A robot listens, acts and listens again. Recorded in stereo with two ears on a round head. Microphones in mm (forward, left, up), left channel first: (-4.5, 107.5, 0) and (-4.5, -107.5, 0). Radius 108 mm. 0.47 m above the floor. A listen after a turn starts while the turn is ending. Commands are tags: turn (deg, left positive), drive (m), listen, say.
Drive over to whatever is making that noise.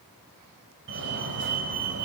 <turn deg="-50"/>
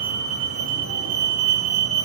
<turn deg="-70"/>
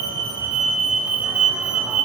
<drive m="1.0"/>
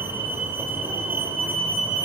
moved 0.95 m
<turn deg="-10"/>
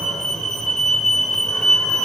<drive m="1.0"/>
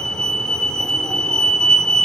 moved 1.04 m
<drive m="1.0"/>
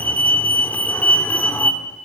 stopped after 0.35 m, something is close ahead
<turn deg="15"/>
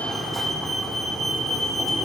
<say>Arrived at the fire alarm, straight ahead.</say>